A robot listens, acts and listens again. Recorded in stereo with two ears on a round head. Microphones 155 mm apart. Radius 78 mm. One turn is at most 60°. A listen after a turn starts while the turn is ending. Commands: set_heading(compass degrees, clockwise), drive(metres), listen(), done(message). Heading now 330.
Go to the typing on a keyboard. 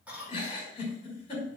listen()
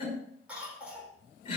listen()
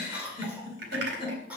set_heading(30)
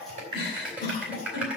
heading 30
drive(1.0)
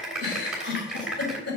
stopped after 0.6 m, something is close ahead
done("Something is in my way. I am facing the typing on a keyboard but have not reached it.")